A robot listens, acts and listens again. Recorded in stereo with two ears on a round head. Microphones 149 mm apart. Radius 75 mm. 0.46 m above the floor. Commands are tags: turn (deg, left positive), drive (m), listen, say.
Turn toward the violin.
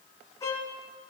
<turn deg="20"/>
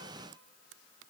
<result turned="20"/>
<listen/>
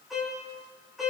<say>Facing the violin.</say>